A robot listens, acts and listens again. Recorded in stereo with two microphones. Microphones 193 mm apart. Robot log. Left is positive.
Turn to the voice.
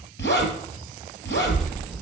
cmd yaw +30
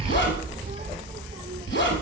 note: So it is at 30° right.
cmd yaw -30
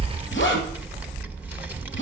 note: The child speaking is now 10° right.
cmd yaw -10
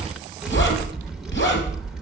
end: Facing the child speaking.